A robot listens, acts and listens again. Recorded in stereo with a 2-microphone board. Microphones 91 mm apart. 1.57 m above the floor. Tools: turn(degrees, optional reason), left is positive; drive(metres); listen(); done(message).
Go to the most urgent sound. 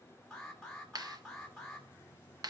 turn(degrees=30)
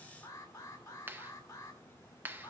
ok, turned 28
turn(degrees=145, reason="So it is at 145° left.")
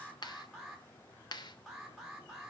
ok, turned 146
drive(metres=1.0)
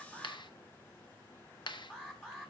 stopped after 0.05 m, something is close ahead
done("Something is in my way. I am facing the alarm but have not reached it.")